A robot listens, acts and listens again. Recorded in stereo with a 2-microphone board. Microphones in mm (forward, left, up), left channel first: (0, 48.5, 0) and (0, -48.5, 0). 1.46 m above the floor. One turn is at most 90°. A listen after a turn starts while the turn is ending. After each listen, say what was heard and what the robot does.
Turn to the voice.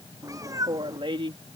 The woman speaking: about 65° right or 115° right. Turn 65° right.
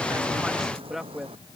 Found it: a woman speaking, straight ahead.